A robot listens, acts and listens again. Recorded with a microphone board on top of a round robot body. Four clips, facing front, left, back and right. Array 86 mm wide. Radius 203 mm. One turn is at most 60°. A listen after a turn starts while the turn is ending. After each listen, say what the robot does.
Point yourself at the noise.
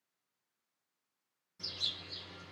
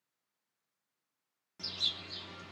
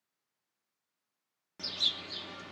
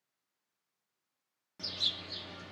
Turn 60° right.
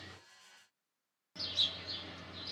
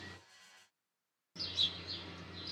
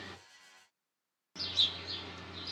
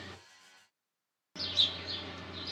Turn 60° right.
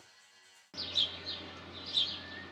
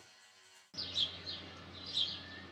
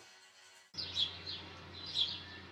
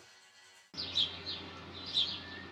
Turn 25° right.
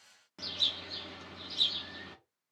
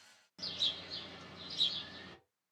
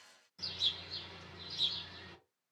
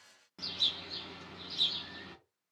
Turn 20° right.
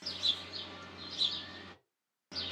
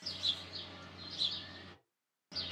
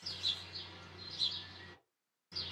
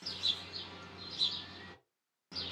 Found it: a bird, straight ahead, 1 to 2 m away.